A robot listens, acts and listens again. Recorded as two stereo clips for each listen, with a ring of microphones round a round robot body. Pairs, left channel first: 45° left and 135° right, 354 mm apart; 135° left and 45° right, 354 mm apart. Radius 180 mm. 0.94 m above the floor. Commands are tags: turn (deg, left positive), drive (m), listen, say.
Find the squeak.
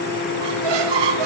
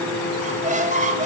<turn deg="-115"/>
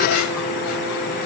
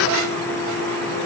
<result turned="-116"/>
<listen/>
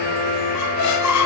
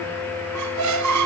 <say>Facing the squeak, 1 to 2 m away.</say>